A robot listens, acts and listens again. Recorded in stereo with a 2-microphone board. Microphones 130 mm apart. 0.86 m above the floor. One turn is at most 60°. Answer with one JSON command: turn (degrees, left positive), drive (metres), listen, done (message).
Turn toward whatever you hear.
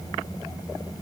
{"listen": true}
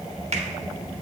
{"turn": -55}
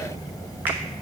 {"listen": true}
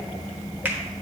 {"turn": -15}
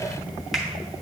{"done": "Found it: a finger snap, straight ahead."}